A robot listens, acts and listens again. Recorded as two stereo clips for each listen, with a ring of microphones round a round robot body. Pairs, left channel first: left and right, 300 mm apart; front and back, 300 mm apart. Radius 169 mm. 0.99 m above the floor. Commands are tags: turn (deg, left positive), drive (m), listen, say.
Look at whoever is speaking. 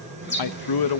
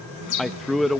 <turn deg="90"/>
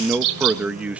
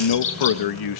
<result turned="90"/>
<say>Found it: a man speaking, straight ahead, 1 to 2 m away.</say>